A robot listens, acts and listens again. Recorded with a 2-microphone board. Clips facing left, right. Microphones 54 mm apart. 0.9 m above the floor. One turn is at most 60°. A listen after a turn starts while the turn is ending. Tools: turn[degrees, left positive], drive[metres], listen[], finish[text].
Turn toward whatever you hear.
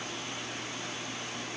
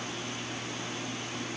Action: listen[]
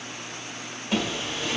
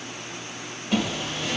Action: turn[30]
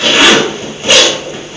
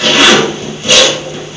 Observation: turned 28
Thought: So it is at 150° left.
Action: turn[60]
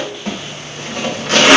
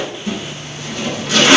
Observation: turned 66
Thought: The zipper is now 85° left.
Action: turn[60]
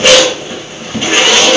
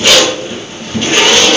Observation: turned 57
Thought: The zipper is now 25° left.
Action: turn[25]
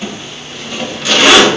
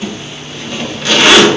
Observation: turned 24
Action: finish[Found it: a zipper, straight ahead, 1 to 2 m away.]